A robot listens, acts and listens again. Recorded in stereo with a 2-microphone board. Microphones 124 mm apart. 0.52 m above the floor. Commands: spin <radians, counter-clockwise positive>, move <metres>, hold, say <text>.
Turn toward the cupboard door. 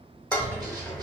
spin 0.52
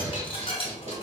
spin -0.44
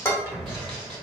say Facing the cupboard door, under 1 m away.